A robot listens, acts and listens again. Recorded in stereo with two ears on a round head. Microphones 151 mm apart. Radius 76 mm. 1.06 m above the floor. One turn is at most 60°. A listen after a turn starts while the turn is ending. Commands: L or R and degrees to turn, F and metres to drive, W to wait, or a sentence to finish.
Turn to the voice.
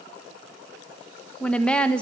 L30
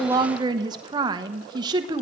R25
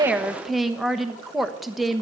Found it: a woman speaking, straight ahead, 1 to 2 m away.